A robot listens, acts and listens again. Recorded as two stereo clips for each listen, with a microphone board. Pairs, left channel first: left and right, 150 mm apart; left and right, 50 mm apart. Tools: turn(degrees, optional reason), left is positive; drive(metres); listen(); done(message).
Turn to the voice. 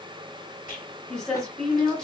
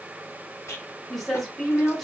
turn(degrees=30)
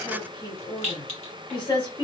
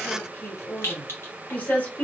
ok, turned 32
turn(degrees=140, reason="So it is at 140° left.")
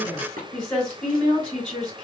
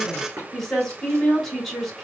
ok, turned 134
done("Facing the woman speaking, 2 to 4 m away.")